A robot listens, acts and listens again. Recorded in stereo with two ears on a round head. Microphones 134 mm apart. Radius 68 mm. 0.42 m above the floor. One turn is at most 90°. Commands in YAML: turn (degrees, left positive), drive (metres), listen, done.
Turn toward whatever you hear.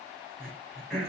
turn: 30
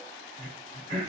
turn: -30
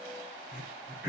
turn: -10
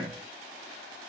done: "Found it: throat clearing, straight ahead, 2 to 4 m away."